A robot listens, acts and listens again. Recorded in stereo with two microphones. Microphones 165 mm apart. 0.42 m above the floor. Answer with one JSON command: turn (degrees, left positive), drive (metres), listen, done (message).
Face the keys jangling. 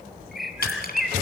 {"listen": true}
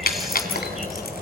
{"turn": 75}
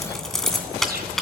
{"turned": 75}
{"done": "Facing the keys jangling, 2 to 4 m away."}